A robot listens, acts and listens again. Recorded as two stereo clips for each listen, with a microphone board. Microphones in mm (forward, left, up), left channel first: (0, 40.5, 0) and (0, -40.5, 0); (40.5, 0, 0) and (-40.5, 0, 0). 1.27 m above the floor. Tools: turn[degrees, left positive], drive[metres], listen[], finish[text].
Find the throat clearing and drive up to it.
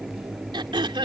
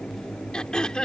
Thought: The throat clearing: 80° right.
Action: turn[-80]
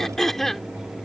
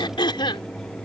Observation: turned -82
Action: drive[1.0]
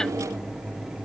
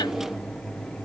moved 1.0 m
Action: listen[]
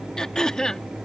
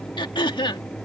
Thought: The throat clearing is now 10° left.
Action: turn[10]
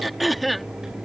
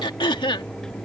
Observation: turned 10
Action: drive[1.0]
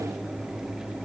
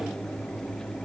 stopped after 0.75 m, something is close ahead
Action: listen[]
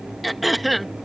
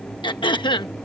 Action: finish[I am next to the throat clearing.]